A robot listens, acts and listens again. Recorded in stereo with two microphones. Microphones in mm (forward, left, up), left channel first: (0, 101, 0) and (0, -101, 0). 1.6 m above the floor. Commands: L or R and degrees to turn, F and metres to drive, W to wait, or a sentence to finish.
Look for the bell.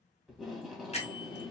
L35
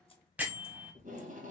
Facing the bell, 1 to 2 m away.